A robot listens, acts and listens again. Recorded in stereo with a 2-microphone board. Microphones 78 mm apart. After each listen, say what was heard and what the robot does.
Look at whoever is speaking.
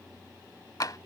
Keep listening.
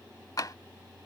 Keep listening.
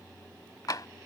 I can't make out anyone speaking, only tapping.